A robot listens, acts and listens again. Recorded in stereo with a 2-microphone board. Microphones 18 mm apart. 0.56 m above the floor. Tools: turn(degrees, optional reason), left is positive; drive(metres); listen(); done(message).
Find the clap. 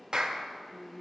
turn(degrees=-45, reason="The clap: about 45° right or 135° right.")
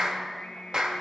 turn(degrees=-75, reason="So it is at 75° right.")
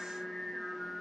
listen()
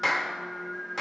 done("Found it: a clap, straight ahead.")